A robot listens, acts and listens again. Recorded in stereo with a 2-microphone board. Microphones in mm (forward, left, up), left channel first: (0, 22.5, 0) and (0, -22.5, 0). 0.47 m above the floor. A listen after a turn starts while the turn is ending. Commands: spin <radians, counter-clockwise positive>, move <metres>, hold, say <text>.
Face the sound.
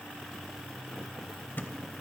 spin 0.87
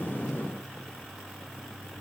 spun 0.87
hold
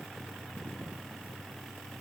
say I heard a thud, but can't make it out now. It was about straight ahead or 80° left.